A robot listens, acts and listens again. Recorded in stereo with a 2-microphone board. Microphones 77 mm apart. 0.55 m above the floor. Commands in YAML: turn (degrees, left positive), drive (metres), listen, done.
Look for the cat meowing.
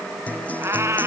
turn: -40
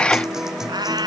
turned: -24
turn: -105
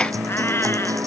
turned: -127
turn: 20
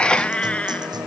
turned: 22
turn: 15
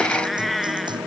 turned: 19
done: "Facing the cat meowing."